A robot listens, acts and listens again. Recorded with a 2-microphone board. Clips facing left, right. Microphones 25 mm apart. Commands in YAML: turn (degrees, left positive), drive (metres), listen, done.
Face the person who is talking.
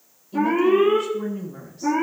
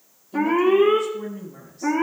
turn: 15
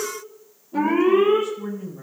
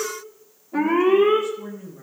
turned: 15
done: "Facing the woman speaking, over 4 m away."